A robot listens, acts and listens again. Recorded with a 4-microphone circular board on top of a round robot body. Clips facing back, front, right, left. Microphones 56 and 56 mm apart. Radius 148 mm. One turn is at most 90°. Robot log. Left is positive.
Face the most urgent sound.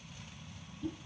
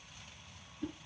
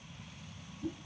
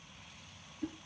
cmd idle
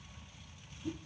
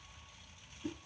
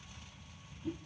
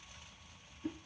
cmd idle
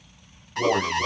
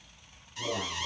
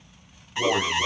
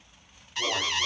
note: The alarm: 155° right.
cmd yaw -90
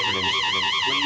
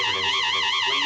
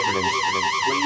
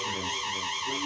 note: The alarm is now 90° right.
cmd yaw -90
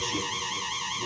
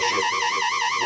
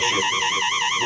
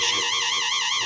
note: The alarm is now 25° right.
cmd yaw -25
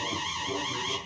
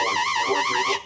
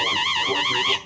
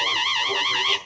end: Found it: an alarm, straight ahead.